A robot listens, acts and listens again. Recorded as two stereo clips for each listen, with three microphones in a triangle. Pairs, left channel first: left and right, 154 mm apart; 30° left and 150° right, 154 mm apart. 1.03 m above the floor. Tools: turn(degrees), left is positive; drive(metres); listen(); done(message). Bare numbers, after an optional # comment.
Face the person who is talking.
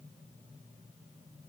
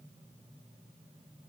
listen()
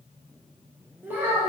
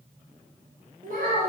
# The child speaking: 165° right.
turn(-165)
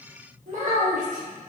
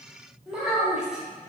# The child speaking is now 65° right.
turn(-65)
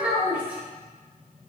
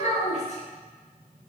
# The child speaking is now 10° right.
turn(-10)
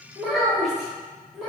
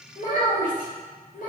done("Facing the child speaking, 1 to 2 m away.")